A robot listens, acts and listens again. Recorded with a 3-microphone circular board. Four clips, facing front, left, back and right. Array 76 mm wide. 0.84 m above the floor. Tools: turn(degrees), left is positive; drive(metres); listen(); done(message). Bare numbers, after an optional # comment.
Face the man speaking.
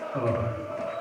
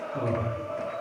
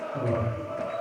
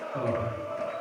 done("Found it: a man speaking, straight ahead.")